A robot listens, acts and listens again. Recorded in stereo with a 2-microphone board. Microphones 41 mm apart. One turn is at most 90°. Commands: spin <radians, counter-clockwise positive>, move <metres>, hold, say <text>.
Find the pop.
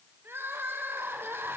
hold
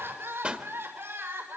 spin -0.44
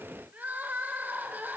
hold
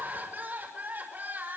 say I heard a pop, but can't make it out now. It was about straight ahead or 130° right.